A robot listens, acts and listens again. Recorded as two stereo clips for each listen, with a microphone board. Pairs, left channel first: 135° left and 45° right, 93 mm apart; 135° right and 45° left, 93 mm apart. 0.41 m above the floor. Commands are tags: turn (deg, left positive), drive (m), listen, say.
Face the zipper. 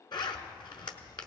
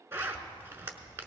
<turn deg="105"/>
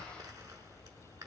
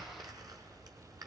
<say>Found it: a zipper, straight ahead.</say>